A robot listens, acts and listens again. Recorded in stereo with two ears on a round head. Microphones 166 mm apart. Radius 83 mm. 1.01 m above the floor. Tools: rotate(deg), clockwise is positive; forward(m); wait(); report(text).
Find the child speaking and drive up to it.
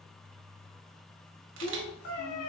rotate(-50)
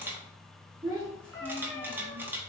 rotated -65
rotate(15)
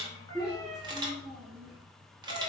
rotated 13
forward(1.0)
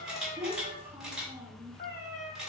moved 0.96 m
rotate(10)
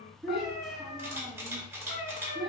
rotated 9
forward(1.0)
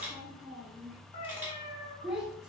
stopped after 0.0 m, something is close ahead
report("I am next to the child speaking.")